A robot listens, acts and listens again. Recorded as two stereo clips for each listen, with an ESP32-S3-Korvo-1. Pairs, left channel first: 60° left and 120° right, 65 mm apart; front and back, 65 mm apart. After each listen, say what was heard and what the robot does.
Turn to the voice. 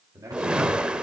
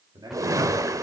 The man speaking: 165° right. Turn 165° right.
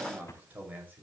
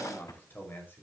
The man speaking is now 60° right. Turn 60° right.
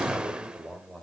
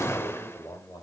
The man speaking is now 30° right. Turn 30° right.
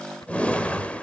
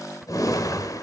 Keep listening.
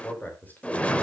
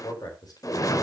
Facing the man speaking, over 4 m away.